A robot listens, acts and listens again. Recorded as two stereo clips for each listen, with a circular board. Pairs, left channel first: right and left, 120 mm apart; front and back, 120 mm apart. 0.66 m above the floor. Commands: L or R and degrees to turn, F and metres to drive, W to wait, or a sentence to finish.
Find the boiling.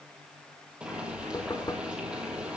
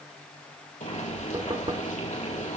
L10
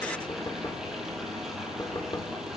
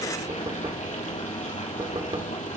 Facing the boiling, 2 to 4 m away.